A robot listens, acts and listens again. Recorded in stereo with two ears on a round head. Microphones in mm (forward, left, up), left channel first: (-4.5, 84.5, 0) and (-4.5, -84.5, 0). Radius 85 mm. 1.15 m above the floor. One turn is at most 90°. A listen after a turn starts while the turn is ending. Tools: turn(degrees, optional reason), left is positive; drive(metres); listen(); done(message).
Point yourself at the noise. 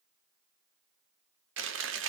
turn(degrees=-75, reason="The chewing: about 75° right or 105° right.")
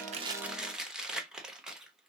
done("Found it: chewing, straight ahead, under 1 m away.")